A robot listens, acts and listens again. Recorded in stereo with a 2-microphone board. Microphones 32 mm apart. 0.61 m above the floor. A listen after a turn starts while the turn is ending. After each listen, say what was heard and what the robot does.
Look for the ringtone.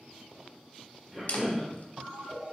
The ringtone: about 50° right or 130° right. Turn 50° right.
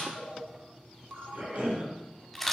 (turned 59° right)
So it is at 75° right. Turn 75° right.
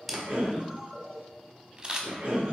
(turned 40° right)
The ringtone is now 35° right. Turn 35° right.
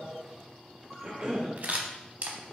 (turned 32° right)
Found it: a ringtone, straight ahead, 1 to 2 m away.